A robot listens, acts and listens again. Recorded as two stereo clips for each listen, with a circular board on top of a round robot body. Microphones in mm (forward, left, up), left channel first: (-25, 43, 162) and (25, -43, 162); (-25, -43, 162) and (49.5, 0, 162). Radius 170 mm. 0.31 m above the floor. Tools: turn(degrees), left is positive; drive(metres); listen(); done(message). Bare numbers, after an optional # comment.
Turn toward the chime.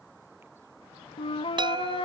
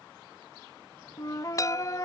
# The chime: 100° right.
turn(-100)
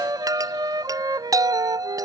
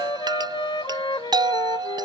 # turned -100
done("Found it: a chime, straight ahead.")